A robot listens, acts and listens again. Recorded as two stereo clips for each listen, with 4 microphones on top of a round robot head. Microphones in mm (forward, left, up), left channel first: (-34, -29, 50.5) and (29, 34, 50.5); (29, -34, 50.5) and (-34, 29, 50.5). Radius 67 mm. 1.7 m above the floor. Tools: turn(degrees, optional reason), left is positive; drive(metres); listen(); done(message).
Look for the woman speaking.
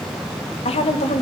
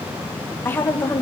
turn(degrees=-120, reason="The woman speaking: 120° right.")
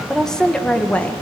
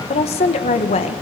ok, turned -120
turn(degrees=-60, reason="The woman speaking is now 60° right.")
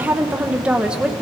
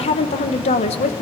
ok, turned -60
turn(degrees=-40, reason="The woman speaking is now 40° right.")
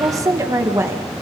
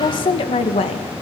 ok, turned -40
turn(degrees=-20, reason="The woman speaking is now 20° right.")
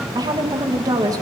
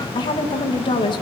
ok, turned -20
done("Found it: a woman speaking, straight ahead.")